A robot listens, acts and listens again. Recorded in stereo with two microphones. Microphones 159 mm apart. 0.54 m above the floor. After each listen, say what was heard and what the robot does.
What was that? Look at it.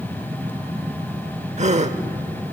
The gasp: about 45° right or 135° right. Turn 45° right.
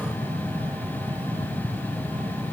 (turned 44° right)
Keep listening.
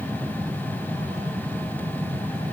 I heard a gasp, but can't make it out now. It was about straight ahead or 90° right.